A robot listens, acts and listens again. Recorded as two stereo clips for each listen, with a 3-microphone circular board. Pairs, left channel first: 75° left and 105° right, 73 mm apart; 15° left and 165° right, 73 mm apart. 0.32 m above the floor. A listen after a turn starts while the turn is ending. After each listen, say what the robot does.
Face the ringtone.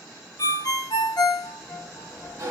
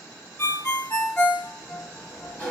Turn 70° left.
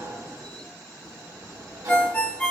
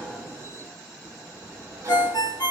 Found it: a ringtone, straight ahead.